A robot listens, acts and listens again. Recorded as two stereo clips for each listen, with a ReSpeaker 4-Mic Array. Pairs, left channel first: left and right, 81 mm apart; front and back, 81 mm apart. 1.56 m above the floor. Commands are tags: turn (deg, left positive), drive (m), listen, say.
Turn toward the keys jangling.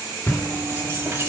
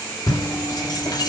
<turn deg="-30"/>
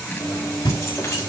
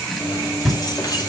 <turn deg="35"/>
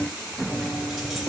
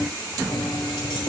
<say>Facing the keys jangling, over 4 m away.</say>